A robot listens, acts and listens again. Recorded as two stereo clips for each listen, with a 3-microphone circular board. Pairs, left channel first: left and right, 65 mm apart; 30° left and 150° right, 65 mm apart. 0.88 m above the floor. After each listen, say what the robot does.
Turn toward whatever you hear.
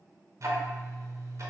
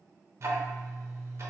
Turn 110° right.
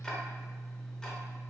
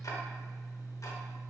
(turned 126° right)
Turn 15° left.
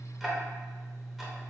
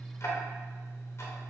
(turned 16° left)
Facing the ticking.